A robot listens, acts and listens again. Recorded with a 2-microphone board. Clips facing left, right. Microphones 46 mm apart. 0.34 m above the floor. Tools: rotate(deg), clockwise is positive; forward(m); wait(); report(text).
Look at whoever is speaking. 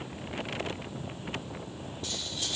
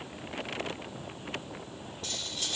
wait()
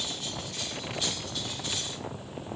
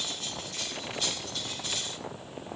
wait()
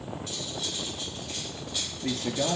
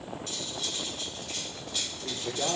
rotate(-90)
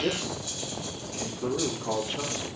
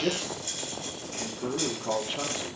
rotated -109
rotate(30)
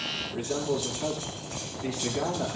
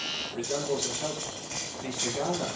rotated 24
report("Found it: a man speaking, straight ahead, over 4 m away.")